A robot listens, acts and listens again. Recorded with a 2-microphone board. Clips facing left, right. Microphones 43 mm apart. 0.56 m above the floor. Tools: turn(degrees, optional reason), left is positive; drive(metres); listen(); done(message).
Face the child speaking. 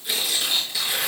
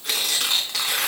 listen()
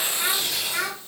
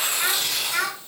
turn(degrees=-30, reason="The child speaking: about 30° right or 150° right.")
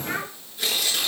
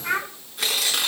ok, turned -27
turn(degrees=-120, reason="So it is at 120° right.")
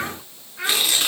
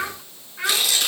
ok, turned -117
done("Found it: a child speaking, straight ahead, 2 to 4 m away.")